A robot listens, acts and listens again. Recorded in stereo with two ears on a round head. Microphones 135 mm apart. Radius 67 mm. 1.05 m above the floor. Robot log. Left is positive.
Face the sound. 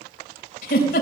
note: The giggle: about 60° left or 120° left.
cmd yaw +60
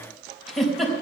end: Found it: a giggle, straight ahead, 2 to 4 m away.